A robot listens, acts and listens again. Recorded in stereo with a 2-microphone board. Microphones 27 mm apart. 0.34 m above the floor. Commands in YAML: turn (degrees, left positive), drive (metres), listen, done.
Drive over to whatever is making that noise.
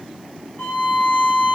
turn: 55
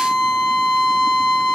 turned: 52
turn: 15
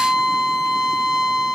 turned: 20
drive: 1.0
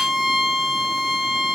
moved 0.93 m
drive: 1.0
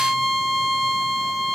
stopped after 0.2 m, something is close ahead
done: "I am next to the violin."